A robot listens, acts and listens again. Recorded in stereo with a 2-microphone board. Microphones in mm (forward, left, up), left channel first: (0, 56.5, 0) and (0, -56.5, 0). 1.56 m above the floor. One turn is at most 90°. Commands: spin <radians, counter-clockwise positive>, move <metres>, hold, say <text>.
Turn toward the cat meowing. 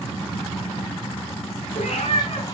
spin 1.13
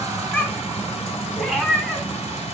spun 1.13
say Facing the cat meowing.